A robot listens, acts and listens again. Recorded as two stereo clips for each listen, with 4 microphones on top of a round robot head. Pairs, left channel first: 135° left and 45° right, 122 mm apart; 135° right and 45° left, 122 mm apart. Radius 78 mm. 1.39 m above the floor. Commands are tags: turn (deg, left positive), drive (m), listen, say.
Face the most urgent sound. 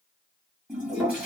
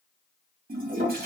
<listen/>
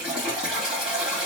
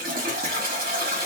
<listen/>
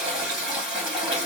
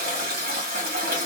<say>I can't make out anything urgent to turn to.</say>